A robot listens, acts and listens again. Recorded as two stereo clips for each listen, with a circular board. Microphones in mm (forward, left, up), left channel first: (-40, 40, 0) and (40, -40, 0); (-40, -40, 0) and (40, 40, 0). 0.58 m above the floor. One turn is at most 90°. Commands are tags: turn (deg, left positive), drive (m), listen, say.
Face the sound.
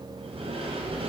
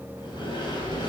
<turn deg="-85"/>
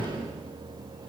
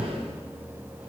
<say>Facing the sliding door, 2 to 4 m away.</say>